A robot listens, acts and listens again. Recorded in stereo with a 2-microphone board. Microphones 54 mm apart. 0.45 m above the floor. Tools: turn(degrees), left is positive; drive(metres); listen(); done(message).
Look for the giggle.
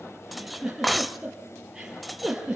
turn(degrees=-30)
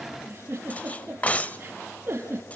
turn(degrees=-140)
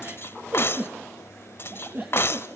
turn(degrees=-40)
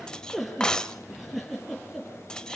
done("Found it: a giggle, straight ahead.")